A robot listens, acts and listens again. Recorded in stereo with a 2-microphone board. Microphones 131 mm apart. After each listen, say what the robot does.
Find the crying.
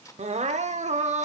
Turn 65° right.
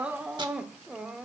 Found it: crying, straight ahead, under 1 m away.